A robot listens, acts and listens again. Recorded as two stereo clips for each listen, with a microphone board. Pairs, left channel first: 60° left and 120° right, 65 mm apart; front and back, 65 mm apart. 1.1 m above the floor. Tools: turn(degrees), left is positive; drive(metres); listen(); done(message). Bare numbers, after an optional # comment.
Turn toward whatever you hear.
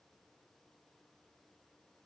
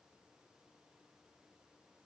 listen()
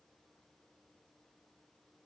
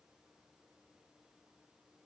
listen()
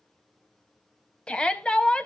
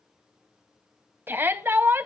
# The shout: 130° left.
turn(130)
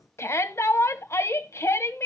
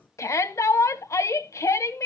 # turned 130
# The shout is now 25° left.
turn(25)
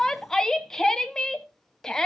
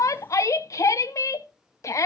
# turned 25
# The shout is now 20° right.
turn(-20)
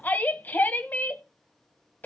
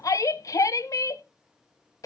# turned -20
done("Found it: a shout, straight ahead, under 1 m away.")